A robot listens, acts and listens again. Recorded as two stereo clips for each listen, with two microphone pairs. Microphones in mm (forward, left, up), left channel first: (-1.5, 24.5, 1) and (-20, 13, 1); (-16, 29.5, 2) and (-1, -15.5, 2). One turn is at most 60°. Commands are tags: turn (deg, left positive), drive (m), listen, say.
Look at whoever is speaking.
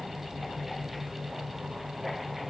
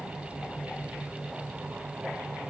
<listen/>
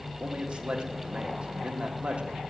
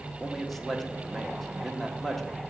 <turn deg="-60"/>
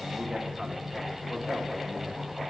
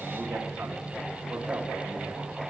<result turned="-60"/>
<turn deg="-60"/>
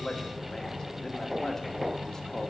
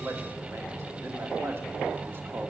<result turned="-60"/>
<turn deg="-40"/>
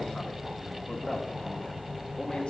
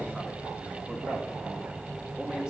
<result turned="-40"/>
<listen/>
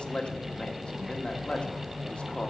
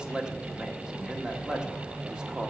<say>Found it: a man speaking, straight ahead, 1 to 2 m away.</say>